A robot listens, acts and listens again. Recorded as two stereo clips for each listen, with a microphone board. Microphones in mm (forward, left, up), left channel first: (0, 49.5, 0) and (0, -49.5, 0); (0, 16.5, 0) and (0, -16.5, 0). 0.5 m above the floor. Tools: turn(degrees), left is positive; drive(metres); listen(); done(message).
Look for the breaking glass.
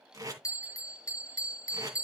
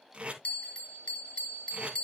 listen()
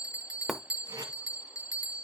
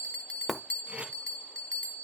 turn(degrees=30)
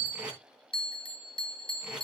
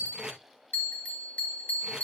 listen()
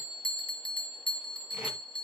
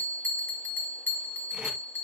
done("I heard breaking glass, but can't make it out now. It was about 30° right or 150° left.")